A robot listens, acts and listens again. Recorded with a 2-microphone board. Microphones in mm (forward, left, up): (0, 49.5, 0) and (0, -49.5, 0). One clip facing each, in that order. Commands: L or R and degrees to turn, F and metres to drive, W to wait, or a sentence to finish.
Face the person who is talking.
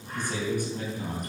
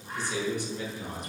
L45
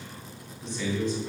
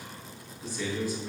R10
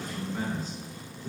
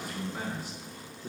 R15
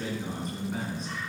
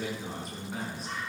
Found it: a man speaking, straight ahead.